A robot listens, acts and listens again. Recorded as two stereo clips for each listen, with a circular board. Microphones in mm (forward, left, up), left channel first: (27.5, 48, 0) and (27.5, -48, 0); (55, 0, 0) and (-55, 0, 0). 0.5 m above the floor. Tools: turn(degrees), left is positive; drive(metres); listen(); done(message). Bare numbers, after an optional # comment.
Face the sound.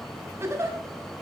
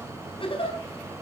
# The giggle: 30° right.
turn(-30)
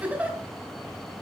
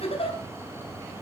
# The giggle is now 15° right.
turn(-15)
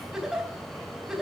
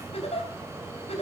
done("Found it: a giggle, straight ahead, over 4 m away.")